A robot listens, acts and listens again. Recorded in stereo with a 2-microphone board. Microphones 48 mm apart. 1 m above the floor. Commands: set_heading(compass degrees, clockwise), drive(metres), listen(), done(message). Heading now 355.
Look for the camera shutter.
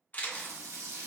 set_heading(325)
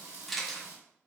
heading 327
done("Facing the camera shutter.")